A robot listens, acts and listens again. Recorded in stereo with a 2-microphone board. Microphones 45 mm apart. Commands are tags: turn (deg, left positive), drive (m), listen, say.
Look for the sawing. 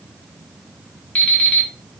<listen/>
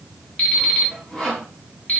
<turn deg="30"/>
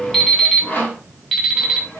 <turn deg="135"/>
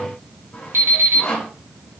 <turn deg="40"/>
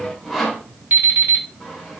<say>Found it: sawing, straight ahead.</say>